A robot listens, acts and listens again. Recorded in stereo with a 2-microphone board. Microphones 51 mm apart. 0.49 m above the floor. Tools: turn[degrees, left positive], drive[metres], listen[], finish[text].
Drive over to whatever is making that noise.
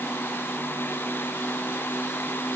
Action: listen[]
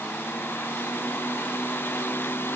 Action: listen[]
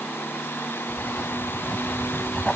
Action: turn[30]
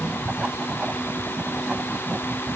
Thought: So it is at 20° right.
Action: turn[-20]
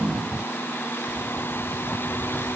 Action: drive[1.0]
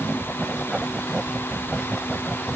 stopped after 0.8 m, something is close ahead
Action: finish[Blocked. The writing is further on, straight ahead.]